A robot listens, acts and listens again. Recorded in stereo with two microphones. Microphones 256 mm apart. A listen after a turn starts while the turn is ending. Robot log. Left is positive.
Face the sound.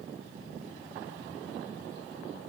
cmd idle
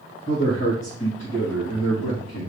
cmd yaw +90
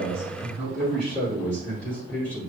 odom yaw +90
end: Facing the man speaking, over 4 m away.